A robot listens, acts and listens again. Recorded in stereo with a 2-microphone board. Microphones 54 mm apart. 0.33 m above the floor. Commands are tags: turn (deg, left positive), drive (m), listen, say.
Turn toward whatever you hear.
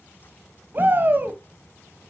<turn deg="-35"/>
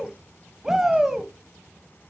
<turn deg="-10"/>
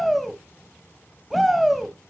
<say>Found it: a shout, straight ahead.</say>